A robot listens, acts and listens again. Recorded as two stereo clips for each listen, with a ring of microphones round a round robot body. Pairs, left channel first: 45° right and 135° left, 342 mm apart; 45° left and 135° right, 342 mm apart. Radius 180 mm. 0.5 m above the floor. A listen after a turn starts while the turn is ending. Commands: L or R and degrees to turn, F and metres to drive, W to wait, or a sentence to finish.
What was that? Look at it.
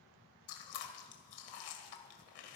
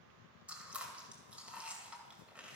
R50
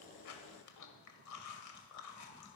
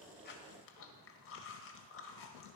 Found it: chewing, straight ahead.